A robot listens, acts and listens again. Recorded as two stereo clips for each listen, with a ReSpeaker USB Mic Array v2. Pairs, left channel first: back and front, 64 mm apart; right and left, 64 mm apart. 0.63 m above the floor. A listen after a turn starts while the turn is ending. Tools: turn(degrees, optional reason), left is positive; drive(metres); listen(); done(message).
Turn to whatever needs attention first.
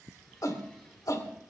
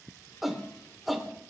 turn(degrees=180, reason="The shout: straight behind.")
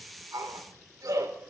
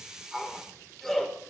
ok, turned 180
done("Found it: a shout, straight ahead, 2 to 4 m away.")